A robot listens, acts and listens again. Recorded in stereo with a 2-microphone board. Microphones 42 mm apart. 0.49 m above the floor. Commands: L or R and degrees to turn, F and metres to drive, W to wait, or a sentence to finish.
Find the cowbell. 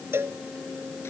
R70
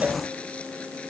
W
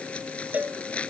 R40
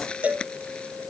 R35
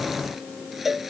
Found it: a cowbell, straight ahead.